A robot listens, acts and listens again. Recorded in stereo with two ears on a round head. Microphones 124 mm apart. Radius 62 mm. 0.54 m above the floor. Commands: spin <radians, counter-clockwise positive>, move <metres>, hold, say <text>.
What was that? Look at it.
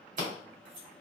spin -1.05
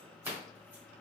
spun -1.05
spin -0.44
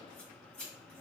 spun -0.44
spin 0.17
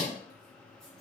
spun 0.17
say Found it: scissors, straight ahead, 2 to 4 m away.